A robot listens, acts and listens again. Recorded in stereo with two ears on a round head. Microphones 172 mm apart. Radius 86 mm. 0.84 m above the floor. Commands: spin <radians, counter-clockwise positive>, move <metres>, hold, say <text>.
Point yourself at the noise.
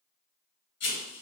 spin 1.05
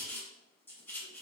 spin 0.26
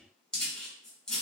say Found it: writing, straight ahead, 1 to 2 m away.